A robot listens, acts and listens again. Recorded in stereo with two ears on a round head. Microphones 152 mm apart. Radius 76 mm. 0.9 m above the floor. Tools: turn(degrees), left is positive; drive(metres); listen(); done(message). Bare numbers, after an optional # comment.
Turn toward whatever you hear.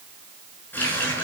turn(30)
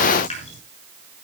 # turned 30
# So it is at 140° left.
turn(140)
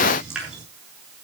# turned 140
done("Found it: a running tap, straight ahead, over 4 m away.")